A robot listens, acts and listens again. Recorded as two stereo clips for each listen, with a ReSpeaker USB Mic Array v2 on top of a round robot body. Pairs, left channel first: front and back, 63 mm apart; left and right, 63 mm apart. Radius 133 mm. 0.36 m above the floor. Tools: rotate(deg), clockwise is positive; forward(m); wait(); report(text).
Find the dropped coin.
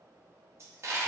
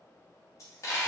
rotate(-130)
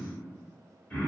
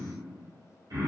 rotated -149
rotate(15)
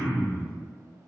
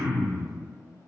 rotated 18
report("Facing where the dropped coin came from. I can't hear it now.")